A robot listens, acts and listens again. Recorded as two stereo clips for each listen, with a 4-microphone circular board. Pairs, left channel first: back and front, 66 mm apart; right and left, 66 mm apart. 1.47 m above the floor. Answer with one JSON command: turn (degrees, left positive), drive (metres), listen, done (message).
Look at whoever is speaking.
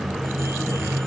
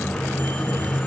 {"listen": true}
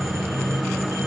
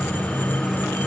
{"listen": true}
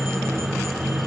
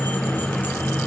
{"done": "I can't make out anyone speaking to turn to."}